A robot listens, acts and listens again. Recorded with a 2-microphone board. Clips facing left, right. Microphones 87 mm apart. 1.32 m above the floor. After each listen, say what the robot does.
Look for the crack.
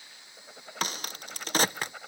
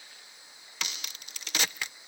Turn 40° left.
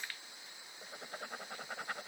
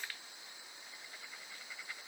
Keep listening.
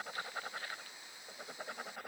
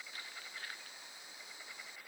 I heard a crack, but can't make it out now. It was about straight ahead or 100° left.